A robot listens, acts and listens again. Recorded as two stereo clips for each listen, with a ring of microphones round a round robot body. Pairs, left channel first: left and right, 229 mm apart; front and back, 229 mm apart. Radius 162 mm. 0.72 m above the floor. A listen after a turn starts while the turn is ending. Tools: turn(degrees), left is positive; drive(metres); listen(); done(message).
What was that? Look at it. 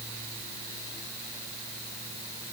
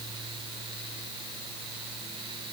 listen()
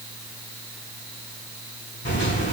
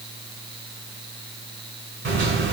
turn(degrees=155)
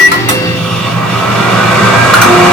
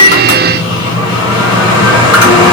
done("Found it: a microwave, straight ahead.")